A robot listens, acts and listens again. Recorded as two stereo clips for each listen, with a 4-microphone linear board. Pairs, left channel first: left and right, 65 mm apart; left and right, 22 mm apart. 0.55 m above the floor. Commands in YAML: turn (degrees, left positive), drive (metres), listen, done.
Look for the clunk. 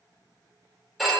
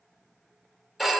listen: true
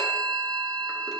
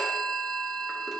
listen: true
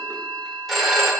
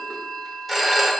done: "I can't make out a clunk, only a phone ringing."